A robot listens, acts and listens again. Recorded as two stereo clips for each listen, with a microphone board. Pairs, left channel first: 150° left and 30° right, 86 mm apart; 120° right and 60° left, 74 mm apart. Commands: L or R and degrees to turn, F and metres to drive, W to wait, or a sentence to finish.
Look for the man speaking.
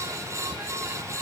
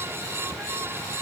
W
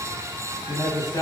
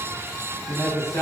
R165
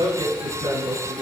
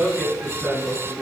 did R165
R25
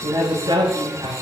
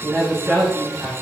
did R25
Found it: a man speaking, straight ahead, over 4 m away.